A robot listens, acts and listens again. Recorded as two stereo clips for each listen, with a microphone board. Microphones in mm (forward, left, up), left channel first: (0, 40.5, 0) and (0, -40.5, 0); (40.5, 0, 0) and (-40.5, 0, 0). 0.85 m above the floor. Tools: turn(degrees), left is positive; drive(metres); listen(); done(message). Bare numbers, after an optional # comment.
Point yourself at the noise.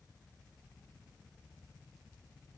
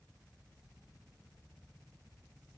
listen()
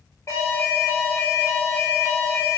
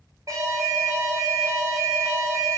# The alarm: 135° left.
turn(135)
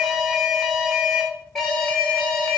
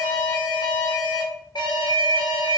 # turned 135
done("Facing the alarm, 1 to 2 m away.")